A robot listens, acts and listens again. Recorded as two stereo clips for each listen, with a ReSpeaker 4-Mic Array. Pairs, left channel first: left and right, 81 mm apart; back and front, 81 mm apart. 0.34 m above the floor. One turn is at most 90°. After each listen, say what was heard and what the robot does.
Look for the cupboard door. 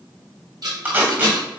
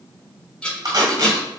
Keep listening.
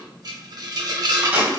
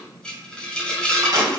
Keep listening.
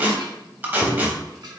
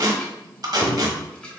The cupboard door: straight behind. Turn 90° left.
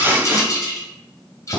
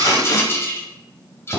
The cupboard door is now 50° left. Turn 50° left.
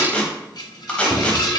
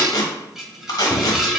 Found it: a cupboard door, straight ahead, 1 to 2 m away.